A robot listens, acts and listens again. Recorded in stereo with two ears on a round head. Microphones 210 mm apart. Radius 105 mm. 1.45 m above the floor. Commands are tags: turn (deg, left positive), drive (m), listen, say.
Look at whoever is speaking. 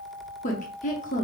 <turn deg="35"/>
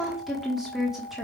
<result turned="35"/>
<say>Facing the woman speaking, 1 to 2 m away.</say>